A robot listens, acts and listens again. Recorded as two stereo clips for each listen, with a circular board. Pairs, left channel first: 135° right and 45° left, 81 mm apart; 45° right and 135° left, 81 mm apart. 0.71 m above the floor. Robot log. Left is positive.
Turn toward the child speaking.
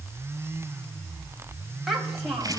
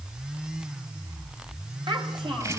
note: The child speaking: 130° left.
cmd yaw +130
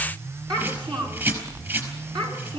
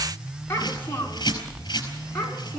note: The child speaking is now 20° left.
cmd yaw +20
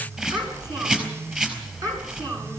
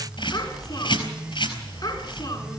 end: Facing the child speaking.